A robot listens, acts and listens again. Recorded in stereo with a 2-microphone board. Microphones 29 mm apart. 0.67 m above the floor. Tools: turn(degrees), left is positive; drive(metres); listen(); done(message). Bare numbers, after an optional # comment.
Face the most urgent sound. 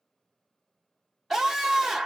turn(30)
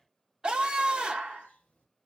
# So it is at 35° right.
turn(-35)
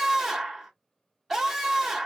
done("Found it: a scream, straight ahead.")